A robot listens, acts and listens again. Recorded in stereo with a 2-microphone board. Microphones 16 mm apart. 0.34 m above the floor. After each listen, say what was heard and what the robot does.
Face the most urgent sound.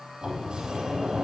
Keep listening.
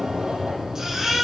The baby crying: about 35° right or 145° right. Turn 35° right.
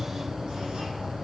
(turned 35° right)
Keep listening.
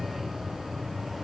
Keep listening.
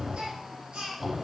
So it is at 110° right. Turn 110° right.
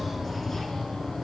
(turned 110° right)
Keep listening.
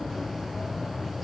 Keep listening.
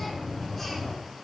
Facing where the baby crying came from. I can't hear it now.